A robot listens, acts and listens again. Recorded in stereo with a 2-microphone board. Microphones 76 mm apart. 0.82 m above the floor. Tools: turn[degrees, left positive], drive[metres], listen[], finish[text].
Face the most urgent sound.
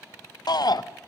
Thought: The shout: about 65° left or 115° left.
Action: turn[65]
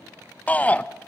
Thought: So it is at 20° left.
Action: turn[20]
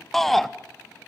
Action: finish[Found it: a shout, straight ahead, under 1 m away.]